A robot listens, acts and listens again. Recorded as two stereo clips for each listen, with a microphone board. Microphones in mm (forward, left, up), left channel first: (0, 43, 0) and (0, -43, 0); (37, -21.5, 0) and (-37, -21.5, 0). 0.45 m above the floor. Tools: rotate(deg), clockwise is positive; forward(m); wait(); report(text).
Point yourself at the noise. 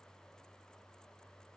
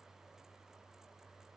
wait()
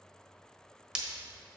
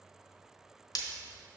rotate(15)
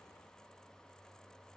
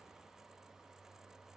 report("I heard breaking glass from this way, but can't make it out now.")